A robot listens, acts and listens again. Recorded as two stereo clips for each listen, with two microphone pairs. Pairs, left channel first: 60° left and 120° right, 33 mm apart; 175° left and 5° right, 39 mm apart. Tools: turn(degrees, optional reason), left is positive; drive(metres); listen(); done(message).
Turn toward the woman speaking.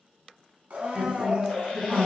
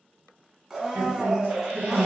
turn(degrees=-15, reason="The woman speaking: 15° right.")
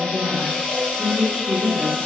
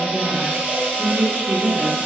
done("Facing the woman speaking, 1 to 2 m away.")